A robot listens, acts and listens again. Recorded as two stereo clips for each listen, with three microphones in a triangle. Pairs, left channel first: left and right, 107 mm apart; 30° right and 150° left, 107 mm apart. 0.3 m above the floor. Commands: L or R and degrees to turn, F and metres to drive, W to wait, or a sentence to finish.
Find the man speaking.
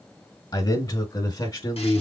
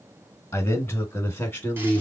L40
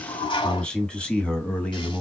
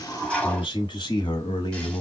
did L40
L15
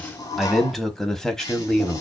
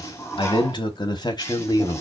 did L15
L10
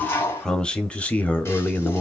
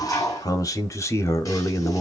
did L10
L15
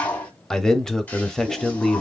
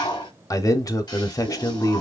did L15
Found it: a man speaking, straight ahead.